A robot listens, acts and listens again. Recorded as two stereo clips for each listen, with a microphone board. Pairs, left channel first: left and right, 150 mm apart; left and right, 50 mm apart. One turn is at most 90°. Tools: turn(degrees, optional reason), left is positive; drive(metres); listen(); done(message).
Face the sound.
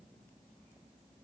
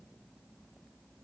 listen()
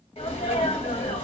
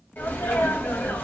turn(degrees=40, reason="The sneeze: about 40° left or 140° left.")
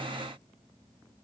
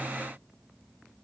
listen()
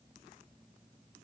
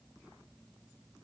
done("I heard a sneeze, but can't make it out now. It was about straight ahead or 100° left.")